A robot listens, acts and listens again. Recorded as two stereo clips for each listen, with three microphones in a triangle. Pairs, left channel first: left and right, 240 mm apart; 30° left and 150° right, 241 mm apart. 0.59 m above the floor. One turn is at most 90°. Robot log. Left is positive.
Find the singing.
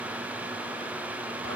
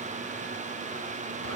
cmd idle
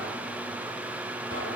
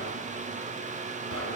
cmd idle
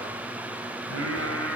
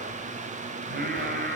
note: The singing: 110° right.
cmd yaw -90
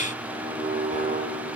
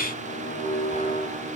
note: The singing is now 30° right.
cmd yaw -30
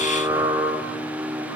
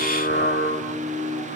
note: The singing is now 15° right.
cmd yaw -15
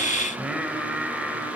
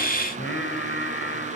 end: Found it: singing, straight ahead, 2 to 4 m away.